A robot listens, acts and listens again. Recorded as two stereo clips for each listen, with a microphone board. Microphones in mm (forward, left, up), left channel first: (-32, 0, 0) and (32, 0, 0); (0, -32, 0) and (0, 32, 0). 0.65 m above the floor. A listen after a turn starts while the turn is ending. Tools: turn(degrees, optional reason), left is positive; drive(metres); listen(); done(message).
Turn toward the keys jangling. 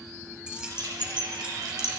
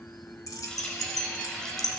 turn(degrees=-75, reason="The keys jangling: 75° right.")
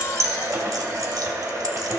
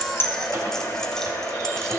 listen()
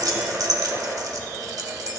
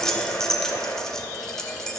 turn(degrees=-10, reason="The keys jangling is now 10° right.")
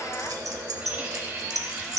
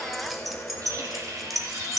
done("Facing the keys jangling, 1 to 2 m away.")